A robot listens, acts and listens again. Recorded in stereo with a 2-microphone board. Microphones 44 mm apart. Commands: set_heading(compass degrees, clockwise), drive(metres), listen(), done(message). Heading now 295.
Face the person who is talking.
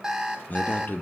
set_heading(250)
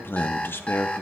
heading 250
set_heading(170)
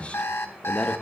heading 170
set_heading(135)
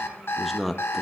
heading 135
done("Found it: a man speaking, straight ahead.")